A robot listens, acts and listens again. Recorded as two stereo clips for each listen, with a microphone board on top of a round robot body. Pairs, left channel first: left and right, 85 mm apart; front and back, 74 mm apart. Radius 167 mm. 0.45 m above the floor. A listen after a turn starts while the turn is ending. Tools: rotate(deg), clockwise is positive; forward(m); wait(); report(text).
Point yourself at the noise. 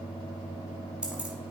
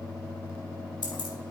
rotate(10)
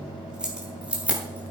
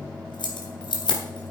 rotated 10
rotate(15)
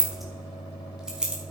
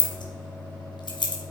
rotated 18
rotate(10)
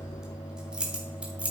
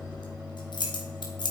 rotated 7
rotate(15)
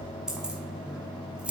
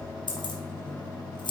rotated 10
rotate(10)
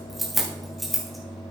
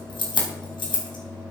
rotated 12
report("Found it: keys jangling, straight ahead, 2 to 4 m away.")